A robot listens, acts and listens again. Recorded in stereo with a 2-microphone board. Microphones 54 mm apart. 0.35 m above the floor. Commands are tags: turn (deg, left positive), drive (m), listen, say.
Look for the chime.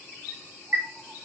<turn deg="-50"/>
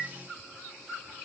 <listen/>
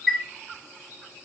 <turn deg="-10"/>
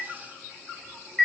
<say>Found it: a chime, straight ahead.</say>